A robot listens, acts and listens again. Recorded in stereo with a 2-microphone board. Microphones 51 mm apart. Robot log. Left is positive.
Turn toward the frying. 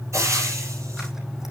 cmd yaw -90
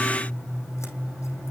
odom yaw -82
note: Nothing new. It was at 10° right.
cmd yaw -10
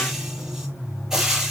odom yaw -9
note: The frying is now 10° right.
cmd yaw -10
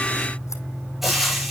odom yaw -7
end: Found it: frying, straight ahead.